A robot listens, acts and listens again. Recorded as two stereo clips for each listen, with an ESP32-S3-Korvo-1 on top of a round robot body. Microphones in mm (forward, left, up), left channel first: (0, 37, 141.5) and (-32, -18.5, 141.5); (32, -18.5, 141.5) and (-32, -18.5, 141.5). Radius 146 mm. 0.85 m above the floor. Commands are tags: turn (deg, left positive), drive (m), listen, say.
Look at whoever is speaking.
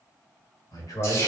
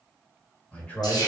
<turn deg="60"/>
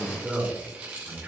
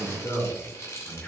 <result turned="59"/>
<turn deg="-60"/>
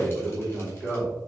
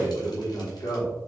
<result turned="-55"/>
<turn deg="-25"/>
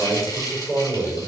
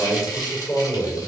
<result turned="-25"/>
<turn deg="-10"/>
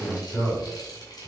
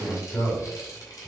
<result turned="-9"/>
<say>Found it: a man speaking, straight ahead, 2 to 4 m away.</say>